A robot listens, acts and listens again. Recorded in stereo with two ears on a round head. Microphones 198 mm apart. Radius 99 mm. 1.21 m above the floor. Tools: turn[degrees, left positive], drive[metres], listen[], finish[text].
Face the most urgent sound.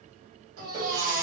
Thought: The baby crying: about 65° right or 115° right.
Action: turn[-65]
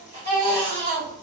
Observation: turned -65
Thought: So it is at 40° right.
Action: turn[-40]
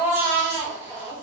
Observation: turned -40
Thought: The baby crying is now 15° right.
Action: turn[-15]
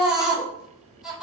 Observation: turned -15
Action: finish[Facing the baby crying.]